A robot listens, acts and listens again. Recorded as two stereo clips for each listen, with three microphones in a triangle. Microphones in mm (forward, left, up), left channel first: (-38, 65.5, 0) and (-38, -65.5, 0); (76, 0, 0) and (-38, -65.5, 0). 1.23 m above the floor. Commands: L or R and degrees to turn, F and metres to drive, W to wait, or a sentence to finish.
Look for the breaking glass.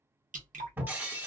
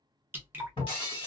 R15
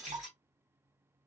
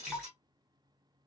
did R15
Facing the breaking glass.